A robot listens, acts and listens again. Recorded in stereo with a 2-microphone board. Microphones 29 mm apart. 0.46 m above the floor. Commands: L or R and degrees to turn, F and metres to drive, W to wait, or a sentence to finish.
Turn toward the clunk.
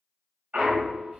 R60
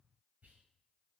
W
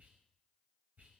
I heard a clunk, but can't make it out now. It was about straight ahead or 60° right.